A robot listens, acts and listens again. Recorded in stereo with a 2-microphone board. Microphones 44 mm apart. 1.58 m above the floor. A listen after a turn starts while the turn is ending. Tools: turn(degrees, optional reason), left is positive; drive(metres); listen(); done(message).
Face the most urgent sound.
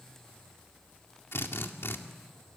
listen()
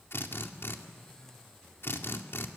listen()
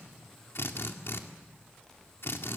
done("I can't make out anything urgent to turn to.")